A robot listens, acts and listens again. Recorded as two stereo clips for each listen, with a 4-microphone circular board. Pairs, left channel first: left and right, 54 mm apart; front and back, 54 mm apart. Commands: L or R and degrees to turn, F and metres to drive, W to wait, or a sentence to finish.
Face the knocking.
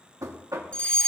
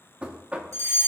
R110
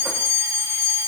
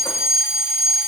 W
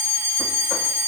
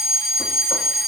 W
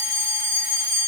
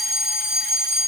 Facing where the knocking came from. I can't hear it now.